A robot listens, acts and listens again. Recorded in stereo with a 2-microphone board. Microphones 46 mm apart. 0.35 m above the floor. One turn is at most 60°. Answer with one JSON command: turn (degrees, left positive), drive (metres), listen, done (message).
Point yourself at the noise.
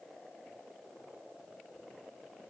{"listen": true}
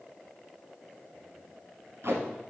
{"turn": -60}
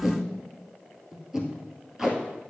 {"turn": -10}
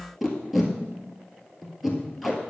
{"done": "Found it: tape being pulled, straight ahead, 1 to 2 m away."}